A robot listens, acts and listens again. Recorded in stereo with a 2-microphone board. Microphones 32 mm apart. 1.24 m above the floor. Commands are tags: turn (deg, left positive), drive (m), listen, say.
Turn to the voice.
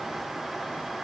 <listen/>
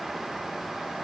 <listen/>
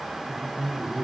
<turn deg="-30"/>
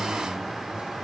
<listen/>
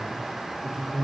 <turn deg="-145"/>
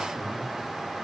<listen/>
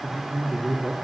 <turn deg="-10"/>
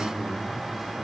<say>Facing the man speaking.</say>